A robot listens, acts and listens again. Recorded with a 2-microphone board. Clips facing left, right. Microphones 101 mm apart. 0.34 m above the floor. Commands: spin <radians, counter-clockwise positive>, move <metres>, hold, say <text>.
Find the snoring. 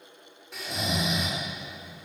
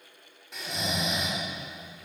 spin 0.52
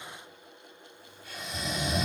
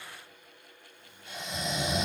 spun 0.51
spin -0.44
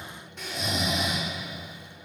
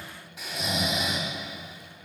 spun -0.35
say Found it: snoring, straight ahead, 1 to 2 m away.